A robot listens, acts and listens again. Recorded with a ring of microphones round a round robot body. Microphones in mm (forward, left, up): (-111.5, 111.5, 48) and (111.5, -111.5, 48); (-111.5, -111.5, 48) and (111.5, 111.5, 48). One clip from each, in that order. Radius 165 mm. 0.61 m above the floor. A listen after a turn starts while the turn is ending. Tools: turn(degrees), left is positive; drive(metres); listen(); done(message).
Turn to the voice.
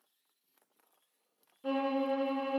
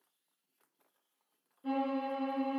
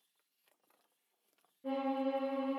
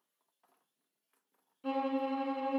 listen()
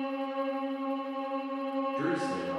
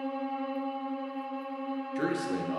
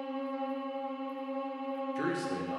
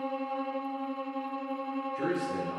turn(degrees=-70)
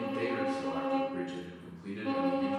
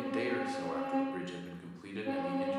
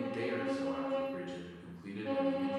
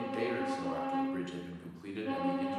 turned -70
done("Found it: a man speaking, straight ahead, 1 to 2 m away.")